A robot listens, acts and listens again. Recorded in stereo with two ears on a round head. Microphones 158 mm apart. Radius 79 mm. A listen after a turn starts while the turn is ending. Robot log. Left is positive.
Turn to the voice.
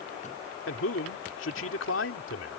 cmd yaw +90
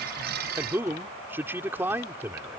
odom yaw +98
note: So it is at 10° right.
cmd yaw -10
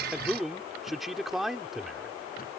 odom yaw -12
end: Facing the man speaking.